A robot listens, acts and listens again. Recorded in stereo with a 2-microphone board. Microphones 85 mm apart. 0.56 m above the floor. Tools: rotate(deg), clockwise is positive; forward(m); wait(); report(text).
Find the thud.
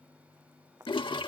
rotate(30)
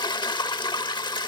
wait()
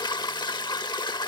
report("I heard a thud, but can't make it out now. It was about straight ahead or 120° right.")